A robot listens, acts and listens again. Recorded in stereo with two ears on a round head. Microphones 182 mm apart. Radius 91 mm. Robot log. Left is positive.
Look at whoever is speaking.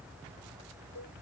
cmd idle
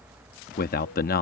note: The man speaking: about 45° left or 135° left.
cmd yaw +45
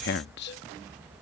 note: So it is at 75° left.
cmd yaw +75
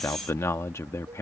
note: The man speaking is now 15° left.
cmd yaw +15
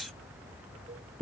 end: Facing the man speaking.